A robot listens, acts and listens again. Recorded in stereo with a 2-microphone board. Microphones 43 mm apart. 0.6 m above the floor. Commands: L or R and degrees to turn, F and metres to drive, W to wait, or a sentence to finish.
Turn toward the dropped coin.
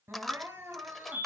L30
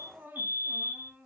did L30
W
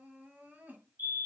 I heard a dropped coin, but can't make it out now. It was about 25° right or 145° left.